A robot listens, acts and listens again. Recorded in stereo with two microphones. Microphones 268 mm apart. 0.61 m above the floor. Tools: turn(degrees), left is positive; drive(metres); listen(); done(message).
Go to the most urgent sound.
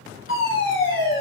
turn(degrees=50)
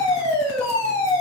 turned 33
turn(degrees=20)
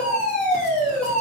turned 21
drive(metres=1.0)
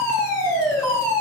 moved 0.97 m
turn(degrees=10)
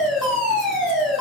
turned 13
drive(metres=1.0)
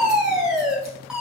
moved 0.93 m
drive(metres=1.0)
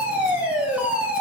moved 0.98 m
drive(metres=1.0)
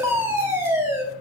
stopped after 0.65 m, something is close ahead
turn(degrees=-15)
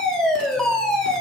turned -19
done("I am next to the fire alarm.")